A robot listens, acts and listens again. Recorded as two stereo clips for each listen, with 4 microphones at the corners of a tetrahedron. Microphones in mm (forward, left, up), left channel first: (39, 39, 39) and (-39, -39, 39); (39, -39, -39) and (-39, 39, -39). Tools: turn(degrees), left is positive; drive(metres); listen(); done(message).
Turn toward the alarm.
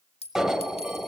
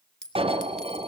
turn(degrees=140)
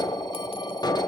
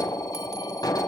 done("Facing the alarm.")